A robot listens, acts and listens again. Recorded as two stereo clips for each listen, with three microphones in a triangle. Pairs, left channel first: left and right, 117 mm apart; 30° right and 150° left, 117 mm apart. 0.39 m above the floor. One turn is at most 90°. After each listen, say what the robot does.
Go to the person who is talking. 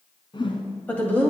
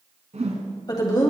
Turn 20° left.
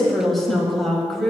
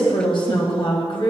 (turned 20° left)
Drive 1.0 m forward.
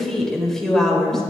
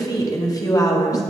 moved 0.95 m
Drive 1.0 m forward.
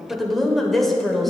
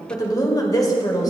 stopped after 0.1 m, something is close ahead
Arrived at the woman speaking, straight ahead.